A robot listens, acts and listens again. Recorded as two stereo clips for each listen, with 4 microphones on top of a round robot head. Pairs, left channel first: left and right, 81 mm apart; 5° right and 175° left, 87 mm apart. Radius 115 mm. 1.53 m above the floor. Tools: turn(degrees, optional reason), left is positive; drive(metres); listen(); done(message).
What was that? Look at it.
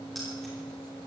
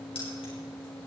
listen()
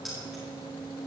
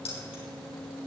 done("Facing the keys jangling.")